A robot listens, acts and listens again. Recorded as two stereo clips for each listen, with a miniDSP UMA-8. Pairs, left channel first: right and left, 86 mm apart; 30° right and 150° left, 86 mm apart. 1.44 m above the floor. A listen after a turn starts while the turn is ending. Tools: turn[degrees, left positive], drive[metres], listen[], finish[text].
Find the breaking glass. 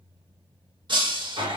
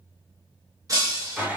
Thought: The breaking glass: 105° left.
Action: turn[105]
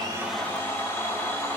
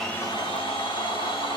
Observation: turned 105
Action: finish[Facing where the breaking glass came from. I can't hear it now.]